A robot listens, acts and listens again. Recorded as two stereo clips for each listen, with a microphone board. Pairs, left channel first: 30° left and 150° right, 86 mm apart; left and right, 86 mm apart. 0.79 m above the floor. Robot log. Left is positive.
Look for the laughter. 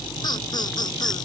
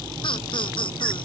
note: The laughter: 70° left.
cmd yaw +70
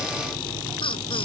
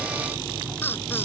note: The laughter is now 25° left.
cmd yaw +25
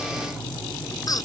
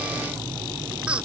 note: The laughter is now 15° right.
cmd yaw -15
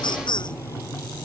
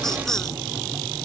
end: Found it: laughter, straight ahead.